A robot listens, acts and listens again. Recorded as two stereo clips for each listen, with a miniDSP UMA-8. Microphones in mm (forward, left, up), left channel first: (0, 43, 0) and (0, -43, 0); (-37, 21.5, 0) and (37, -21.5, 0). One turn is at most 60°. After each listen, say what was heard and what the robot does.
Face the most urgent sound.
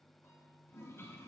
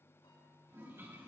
Keep listening.
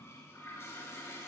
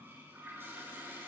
Keep listening.
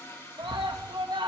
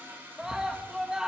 The scream: 115° right. Turn 60° right.
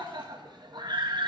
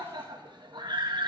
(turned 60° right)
The scream is now 60° right. Turn 60° right.
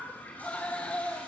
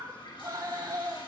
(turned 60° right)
The scream is now 15° left. Turn 15° left.
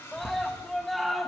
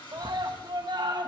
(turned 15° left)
Found it: a scream, straight ahead, 1 to 2 m away.